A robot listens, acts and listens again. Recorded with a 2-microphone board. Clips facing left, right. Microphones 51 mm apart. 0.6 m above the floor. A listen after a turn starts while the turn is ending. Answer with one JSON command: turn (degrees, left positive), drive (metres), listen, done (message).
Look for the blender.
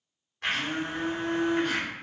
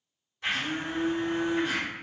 {"turn": 50}
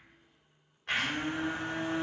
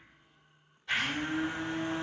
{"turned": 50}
{"turn": 70}
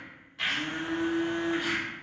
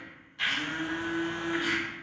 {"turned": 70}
{"done": "Found it: a blender, straight ahead."}